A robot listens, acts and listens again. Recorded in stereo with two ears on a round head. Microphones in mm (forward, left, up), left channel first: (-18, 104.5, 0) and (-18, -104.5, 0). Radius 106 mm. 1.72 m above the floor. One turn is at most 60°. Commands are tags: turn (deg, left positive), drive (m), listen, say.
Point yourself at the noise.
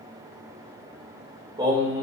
<turn deg="-20"/>
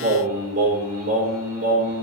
<turn deg="-60"/>
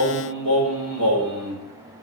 <turn deg="-60"/>
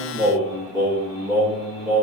<say>Facing the singing, over 4 m away.</say>